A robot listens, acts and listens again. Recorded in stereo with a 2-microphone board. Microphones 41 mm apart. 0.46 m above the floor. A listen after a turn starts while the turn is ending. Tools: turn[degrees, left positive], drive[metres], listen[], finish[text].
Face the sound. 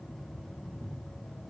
Action: listen[]
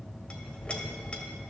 Thought: The clink: about 25° left or 155° left.
Action: turn[25]
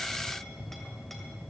Action: listen[]
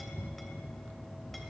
Action: listen[]
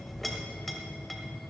Action: finish[Found it: a clink, straight ahead.]